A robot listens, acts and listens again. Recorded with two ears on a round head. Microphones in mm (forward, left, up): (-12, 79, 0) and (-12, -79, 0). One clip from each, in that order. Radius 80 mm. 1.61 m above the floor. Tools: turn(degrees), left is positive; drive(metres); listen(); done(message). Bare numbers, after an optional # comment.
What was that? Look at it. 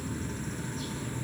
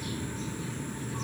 listen()
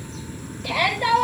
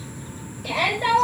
# The shout: about 25° left or 155° left.
turn(25)
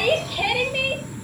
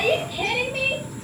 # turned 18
# So it is at 140° left.
turn(140)
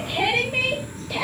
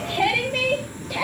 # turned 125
# The shout is now 15° left.
turn(15)
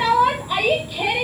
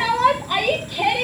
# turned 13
done("Found it: a shout, straight ahead, over 4 m away.")